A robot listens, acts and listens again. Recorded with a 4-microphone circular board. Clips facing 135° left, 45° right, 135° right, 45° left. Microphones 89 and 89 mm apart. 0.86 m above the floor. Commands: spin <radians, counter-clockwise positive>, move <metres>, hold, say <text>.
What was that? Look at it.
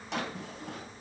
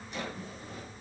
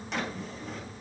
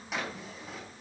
spin 2.27
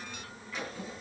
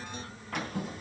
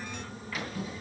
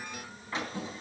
spin -0.26
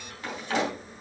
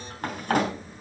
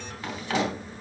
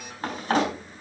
say Found it: a drawer, straight ahead, over 4 m away.